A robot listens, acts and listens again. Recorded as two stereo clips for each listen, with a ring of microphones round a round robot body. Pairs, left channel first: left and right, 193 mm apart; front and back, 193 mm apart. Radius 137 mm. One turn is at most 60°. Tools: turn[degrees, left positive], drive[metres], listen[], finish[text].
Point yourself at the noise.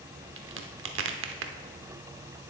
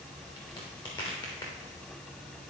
Thought: The crack: 75° right.
Action: turn[-60]
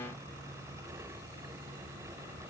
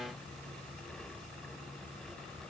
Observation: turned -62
Thought: Nothing new. It was at 15° right.
Action: turn[-15]
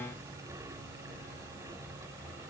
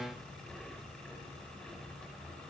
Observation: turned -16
Action: finish[Facing where the crack came from. I can't hear it now.]